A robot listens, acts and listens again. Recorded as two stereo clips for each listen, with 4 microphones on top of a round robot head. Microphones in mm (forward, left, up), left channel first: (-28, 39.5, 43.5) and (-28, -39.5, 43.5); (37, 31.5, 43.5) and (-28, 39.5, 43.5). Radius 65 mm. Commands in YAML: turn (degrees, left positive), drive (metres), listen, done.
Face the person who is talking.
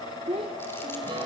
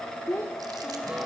turn: -75
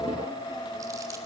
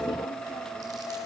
listen: true
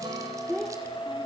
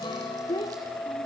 done: "Found it: a child speaking, straight ahead."